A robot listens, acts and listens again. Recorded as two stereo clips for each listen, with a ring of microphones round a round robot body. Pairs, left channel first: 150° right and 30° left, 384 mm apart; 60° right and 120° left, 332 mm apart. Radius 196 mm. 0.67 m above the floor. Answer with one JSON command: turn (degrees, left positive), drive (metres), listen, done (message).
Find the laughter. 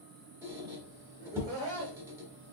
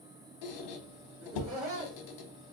{"turn": 130}
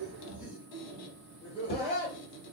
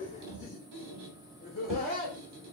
{"turn": -100}
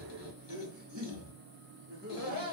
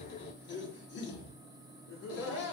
{"turn": -25}
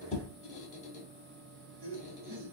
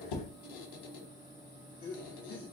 {"done": "Found it: laughter, straight ahead."}